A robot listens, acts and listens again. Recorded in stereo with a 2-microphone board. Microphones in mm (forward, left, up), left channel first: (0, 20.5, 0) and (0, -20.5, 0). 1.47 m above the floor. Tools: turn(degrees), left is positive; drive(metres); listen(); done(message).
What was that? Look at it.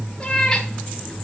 turn(degrees=30)
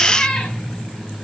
turn(degrees=15)
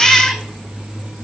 turn(degrees=-30)
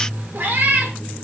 turn(degrees=-125)
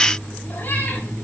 listen()
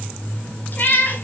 turn(degrees=50)
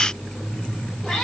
done("Facing the cat meowing, 2 to 4 m away.")